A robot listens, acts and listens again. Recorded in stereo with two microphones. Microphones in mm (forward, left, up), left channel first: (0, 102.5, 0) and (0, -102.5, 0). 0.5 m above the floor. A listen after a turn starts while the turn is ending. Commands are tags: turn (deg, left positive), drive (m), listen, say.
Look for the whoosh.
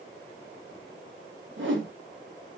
<turn deg="-70"/>
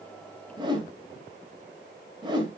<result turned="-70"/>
<turn deg="-20"/>
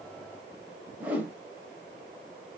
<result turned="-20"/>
<turn deg="-10"/>
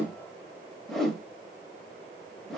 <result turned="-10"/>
<say>Facing the whoosh.</say>